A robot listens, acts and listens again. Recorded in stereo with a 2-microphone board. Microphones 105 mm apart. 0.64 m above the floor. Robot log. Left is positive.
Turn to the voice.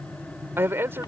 note: The man speaking: about 20° right or 160° right.
cmd yaw -20
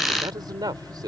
note: So it is at 135° right.
cmd yaw -135
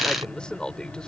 note: The man speaking is now 10° left.
cmd yaw +10
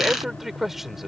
end: Facing the man speaking.